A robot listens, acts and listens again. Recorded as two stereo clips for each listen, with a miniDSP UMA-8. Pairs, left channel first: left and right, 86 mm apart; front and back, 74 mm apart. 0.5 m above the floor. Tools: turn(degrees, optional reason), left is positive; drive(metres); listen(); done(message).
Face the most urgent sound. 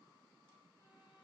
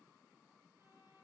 listen()
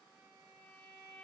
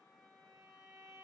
listen()
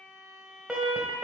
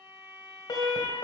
turn(degrees=-10, reason="The alarm: 10° right.")
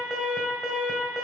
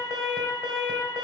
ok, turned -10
done("Facing the alarm.")